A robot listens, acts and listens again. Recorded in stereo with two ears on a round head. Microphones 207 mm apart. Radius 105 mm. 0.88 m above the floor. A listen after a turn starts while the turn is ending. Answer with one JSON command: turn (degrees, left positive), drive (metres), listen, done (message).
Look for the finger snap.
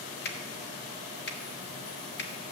{"turn": 50}
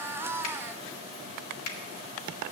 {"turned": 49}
{"turn": 75}
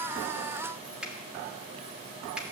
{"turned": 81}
{"done": "Found it: a finger snap, straight ahead, 1 to 2 m away."}